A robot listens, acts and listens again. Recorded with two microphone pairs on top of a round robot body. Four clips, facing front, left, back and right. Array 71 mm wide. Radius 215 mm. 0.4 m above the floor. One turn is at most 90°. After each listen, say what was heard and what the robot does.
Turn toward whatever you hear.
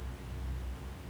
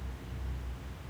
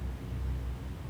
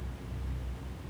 Keep listening.
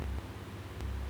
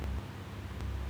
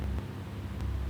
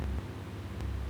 Keep listening.
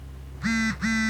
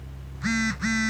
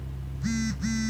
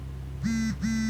The phone buzzing: 50° left. Turn 50° left.
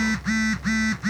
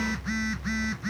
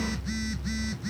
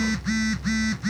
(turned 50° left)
Facing the phone buzzing.